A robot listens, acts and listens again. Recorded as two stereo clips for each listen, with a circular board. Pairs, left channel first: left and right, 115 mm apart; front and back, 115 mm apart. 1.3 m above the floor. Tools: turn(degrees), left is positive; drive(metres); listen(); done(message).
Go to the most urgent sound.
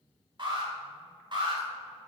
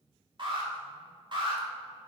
turn(degrees=-135)
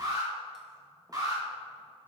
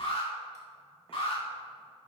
turn(degrees=-35)
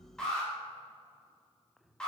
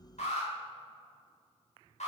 drive(metres=1.0)
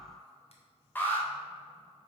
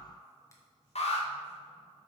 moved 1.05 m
turn(degrees=15)
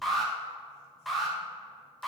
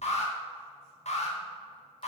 drive(metres=1.0)
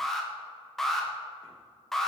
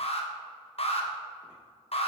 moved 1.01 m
drive(metres=1.0)
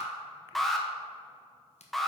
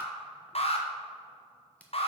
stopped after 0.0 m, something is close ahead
done("I am next to the alarm.")